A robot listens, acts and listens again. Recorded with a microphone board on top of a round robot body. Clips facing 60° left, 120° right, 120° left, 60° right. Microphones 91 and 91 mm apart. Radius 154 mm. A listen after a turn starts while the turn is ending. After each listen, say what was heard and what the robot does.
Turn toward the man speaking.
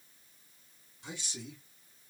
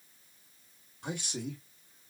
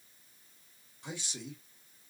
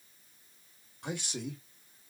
The man speaking: 95° right. Turn 95° right.
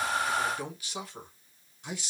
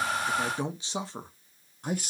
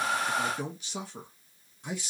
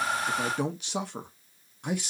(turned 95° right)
The man speaking is now 85° right. Turn 85° right.
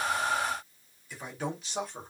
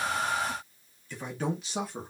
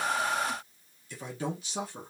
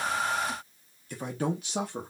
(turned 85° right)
The man speaking is now 35° right. Turn 35° right.
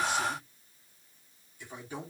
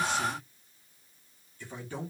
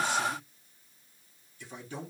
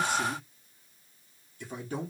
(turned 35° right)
The man speaking is now 15° right. Turn 15° right.
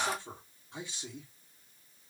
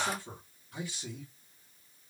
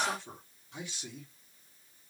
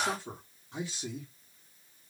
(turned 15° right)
Facing the man speaking, 1 to 2 m away.